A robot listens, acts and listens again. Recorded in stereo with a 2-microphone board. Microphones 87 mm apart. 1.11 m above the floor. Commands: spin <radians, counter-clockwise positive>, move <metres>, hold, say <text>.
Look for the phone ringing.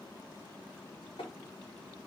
hold
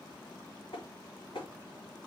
hold
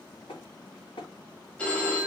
spin 0.52
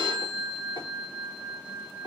spin 2.36
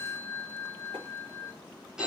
spin -0.17
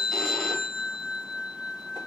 say Facing the phone ringing.